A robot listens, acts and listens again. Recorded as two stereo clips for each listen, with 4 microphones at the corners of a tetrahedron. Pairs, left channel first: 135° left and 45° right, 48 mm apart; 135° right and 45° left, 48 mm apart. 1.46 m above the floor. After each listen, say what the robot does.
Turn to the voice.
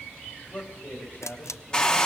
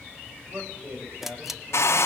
Turn 80° left.
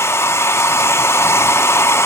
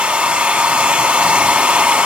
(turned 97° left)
Turn 15° right.
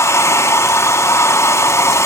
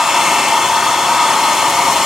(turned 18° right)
Keep listening.
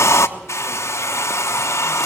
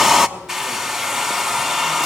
Facing where the man speaking came from. I can't hear it now.